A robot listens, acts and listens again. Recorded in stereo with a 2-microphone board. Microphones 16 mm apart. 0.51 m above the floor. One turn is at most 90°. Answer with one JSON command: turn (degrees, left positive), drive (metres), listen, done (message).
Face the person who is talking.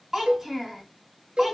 {"turn": -25}
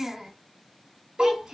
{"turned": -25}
{"turn": -90}
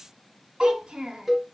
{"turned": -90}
{"turn": -85}
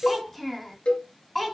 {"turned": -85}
{"turn": 10}
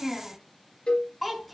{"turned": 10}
{"done": "Found it: a child speaking, straight ahead, 2 to 4 m away."}